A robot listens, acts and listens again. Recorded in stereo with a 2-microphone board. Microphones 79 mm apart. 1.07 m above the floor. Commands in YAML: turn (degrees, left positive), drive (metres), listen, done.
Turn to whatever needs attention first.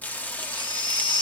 turn: 90
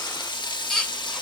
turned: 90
done: "Found it: a baby crying, straight ahead."